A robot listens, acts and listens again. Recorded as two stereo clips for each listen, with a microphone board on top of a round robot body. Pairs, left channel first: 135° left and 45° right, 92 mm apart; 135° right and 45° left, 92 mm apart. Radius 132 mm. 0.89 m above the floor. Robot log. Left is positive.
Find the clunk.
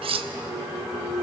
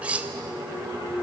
note: The clunk: 110° right.
cmd yaw -110
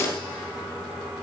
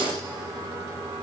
end: Facing where the clunk came from. I can't hear it now.